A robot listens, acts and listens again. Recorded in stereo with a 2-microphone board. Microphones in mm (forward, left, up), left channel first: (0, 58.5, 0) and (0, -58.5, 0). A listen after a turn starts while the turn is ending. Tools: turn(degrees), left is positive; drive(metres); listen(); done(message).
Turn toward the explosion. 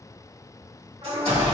turn(degrees=-60)
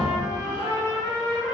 listen()
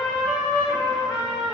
done("I heard an explosion, but can't make it out now. It was about straight ahead or 60° right.")